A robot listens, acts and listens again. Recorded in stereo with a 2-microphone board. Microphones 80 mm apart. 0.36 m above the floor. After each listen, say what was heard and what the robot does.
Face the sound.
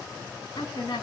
The woman speaking: about 70° left or 110° left. Turn 70° left.
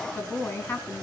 So it is at 30° left. Turn 30° left.
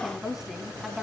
Found it: a woman speaking, straight ahead.